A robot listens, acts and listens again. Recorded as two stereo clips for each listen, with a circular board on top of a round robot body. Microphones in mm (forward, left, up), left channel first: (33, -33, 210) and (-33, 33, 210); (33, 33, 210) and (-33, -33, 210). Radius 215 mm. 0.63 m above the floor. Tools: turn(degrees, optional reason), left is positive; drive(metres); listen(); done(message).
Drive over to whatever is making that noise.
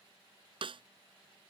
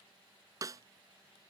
turn(degrees=170, reason="The snare drum: 170° left.")
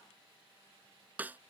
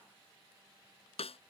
turn(degrees=60, reason="The snare drum is now 60° left.")
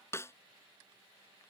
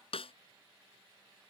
turn(degrees=20, reason="The snare drum is now 20° left.")
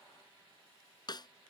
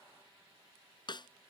drive(metres=1.0)
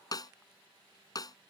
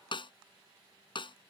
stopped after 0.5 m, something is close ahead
done("Something is in my way. I am facing the snare drum but have not reached it.")